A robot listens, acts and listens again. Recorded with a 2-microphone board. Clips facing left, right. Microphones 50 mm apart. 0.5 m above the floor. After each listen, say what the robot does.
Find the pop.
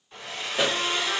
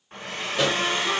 Turn 30° left.
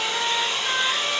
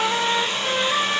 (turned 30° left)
Keep listening.
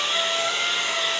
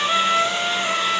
I heard a pop, but can't make it out now. It was about 20° right or 140° left.